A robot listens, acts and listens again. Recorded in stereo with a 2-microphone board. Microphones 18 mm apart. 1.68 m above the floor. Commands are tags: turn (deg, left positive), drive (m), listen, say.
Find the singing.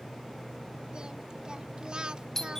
<turn deg="-45"/>
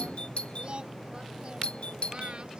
<turn deg="-75"/>
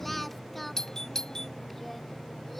<turn deg="10"/>
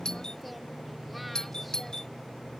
<listen/>
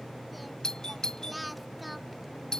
<say>Facing the singing.</say>